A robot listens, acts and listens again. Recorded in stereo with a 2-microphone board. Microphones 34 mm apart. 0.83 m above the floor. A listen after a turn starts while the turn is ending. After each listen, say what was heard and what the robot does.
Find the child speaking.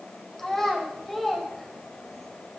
Turn 30° left.
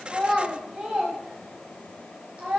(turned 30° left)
So it is at 35° right. Turn 35° right.
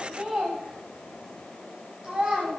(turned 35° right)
The child speaking is now 25° right. Turn 25° right.
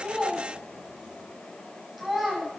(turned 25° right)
The child speaking is now 10° right. Turn 10° right.
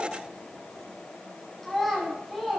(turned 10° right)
Facing the child speaking, over 4 m away.